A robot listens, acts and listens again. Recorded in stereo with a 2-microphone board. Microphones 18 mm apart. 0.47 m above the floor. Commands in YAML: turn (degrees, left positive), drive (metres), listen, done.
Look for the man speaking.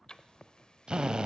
listen: true
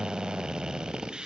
listen: true
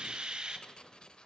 done: "I can't make out a man speaking to turn to."